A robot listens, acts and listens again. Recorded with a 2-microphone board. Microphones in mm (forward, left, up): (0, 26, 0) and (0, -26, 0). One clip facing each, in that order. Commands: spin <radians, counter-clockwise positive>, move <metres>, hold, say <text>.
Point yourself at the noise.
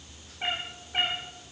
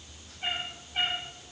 spin 1.05
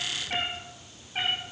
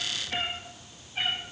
spin 1.05
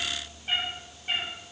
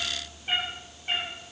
spin -0.17
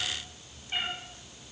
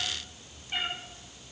say Found it: a cat meowing, straight ahead.